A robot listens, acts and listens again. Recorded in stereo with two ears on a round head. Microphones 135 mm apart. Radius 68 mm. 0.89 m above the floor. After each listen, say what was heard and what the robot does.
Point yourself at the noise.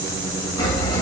The sawing: about 30° left or 150° left. Turn 30° left.
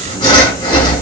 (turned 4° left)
The sawing: about 35° left or 145° left. Turn 35° left.
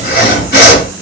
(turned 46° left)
So it is at 100° left. Turn 100° left.
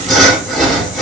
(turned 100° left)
Found it: sawing, straight ahead.